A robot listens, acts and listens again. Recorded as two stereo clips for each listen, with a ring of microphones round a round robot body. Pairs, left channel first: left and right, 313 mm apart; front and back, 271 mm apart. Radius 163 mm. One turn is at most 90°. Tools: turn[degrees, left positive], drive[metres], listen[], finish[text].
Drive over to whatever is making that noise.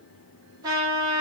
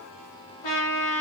Thought: The trumpet: 10° right.
Action: turn[-10]
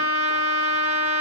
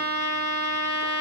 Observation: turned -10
Action: drive[1.0]
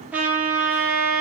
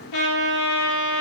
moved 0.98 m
Action: drive[1.0]
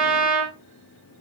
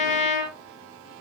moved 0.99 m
Action: drive[1.0]
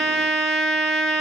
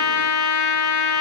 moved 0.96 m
Action: drive[1.0]
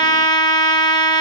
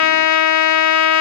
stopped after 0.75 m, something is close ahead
Thought: The trumpet is now 15° left.
Action: turn[15]
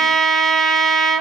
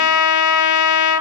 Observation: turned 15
Action: finish[I am next to the trumpet.]